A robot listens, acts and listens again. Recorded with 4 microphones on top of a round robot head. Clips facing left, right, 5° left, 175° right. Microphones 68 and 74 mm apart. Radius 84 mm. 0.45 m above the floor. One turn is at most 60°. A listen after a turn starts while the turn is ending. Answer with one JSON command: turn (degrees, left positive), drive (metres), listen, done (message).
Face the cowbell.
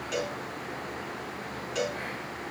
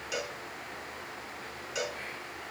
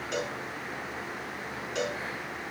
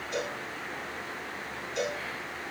{"done": "Found it: a cowbell, straight ahead, over 4 m away."}